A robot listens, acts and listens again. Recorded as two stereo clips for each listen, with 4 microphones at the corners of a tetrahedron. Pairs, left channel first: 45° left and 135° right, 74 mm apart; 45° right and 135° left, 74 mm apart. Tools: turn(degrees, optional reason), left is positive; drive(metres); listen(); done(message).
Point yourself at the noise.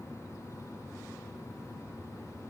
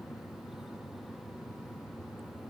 listen()
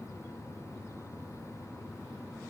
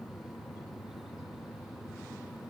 listen()
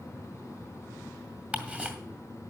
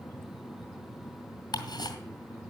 turn(degrees=-60, reason="The ticking: 60° right.")
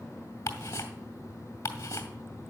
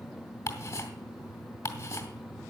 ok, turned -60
done("Found it: ticking, straight ahead, 2 to 4 m away.")